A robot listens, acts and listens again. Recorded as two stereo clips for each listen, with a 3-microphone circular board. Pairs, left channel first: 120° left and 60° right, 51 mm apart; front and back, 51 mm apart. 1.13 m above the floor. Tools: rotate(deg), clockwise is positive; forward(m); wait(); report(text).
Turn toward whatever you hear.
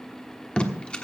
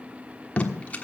rotate(-55)
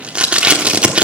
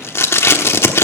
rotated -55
report("Facing the tape being pulled.")